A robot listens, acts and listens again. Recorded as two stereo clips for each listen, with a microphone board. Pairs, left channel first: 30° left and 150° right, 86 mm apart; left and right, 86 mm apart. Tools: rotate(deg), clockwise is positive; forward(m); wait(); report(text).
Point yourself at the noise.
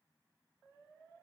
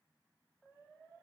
wait()
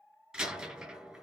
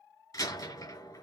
rotate(-130)
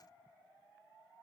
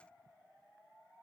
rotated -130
report("Facing where the door slam came from. I can't hear it now.")